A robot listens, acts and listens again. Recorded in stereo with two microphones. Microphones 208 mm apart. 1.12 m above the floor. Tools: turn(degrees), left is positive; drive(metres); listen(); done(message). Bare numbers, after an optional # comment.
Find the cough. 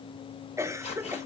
turn(-30)
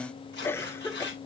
# So it is at 10° left.
turn(10)
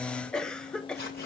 done("Found it: a cough, straight ahead, 1 to 2 m away.")